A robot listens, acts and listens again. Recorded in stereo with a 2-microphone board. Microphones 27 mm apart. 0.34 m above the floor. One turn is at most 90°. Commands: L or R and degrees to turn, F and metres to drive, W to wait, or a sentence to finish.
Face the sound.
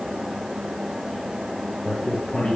L40
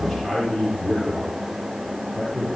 Facing the man speaking.